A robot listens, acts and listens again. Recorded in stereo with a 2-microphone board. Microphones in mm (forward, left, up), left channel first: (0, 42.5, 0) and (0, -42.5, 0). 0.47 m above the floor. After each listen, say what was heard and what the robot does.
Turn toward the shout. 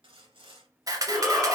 Turn 30° right.
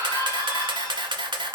So it is at 140° right. Turn 140° right.
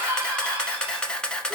The shout is now 25° right. Turn 25° right.
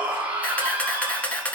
The shout is now 20° right. Turn 20° right.
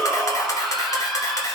Facing the shout, 1 to 2 m away.